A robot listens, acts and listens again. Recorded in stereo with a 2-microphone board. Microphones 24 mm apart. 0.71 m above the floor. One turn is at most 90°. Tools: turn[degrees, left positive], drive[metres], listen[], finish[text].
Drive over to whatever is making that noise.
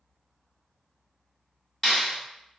Action: turn[30]
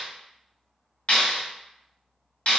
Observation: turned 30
Thought: So it is at 140° left.
Action: turn[90]
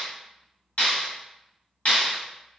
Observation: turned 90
Thought: The clap is now 50° left.
Action: turn[50]
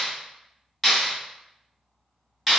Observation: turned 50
Action: drive[1.0]
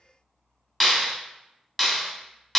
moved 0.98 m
Action: drive[1.0]
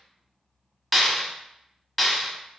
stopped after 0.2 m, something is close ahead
Action: finish[I am next to the clap.]